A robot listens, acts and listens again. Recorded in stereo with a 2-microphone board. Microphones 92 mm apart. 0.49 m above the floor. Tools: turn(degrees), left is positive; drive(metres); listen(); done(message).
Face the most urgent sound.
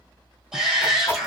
turn(degrees=-30)
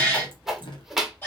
turn(degrees=25)
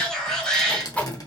done("Facing the shout, 1 to 2 m away.")